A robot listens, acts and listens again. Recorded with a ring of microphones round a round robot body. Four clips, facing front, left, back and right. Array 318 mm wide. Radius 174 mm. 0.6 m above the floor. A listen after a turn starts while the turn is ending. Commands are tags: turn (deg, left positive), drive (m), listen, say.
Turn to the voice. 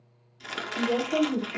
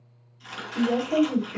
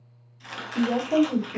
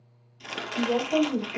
<turn deg="155"/>
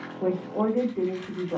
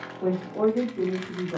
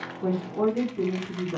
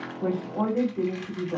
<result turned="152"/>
<say>Facing the woman speaking.</say>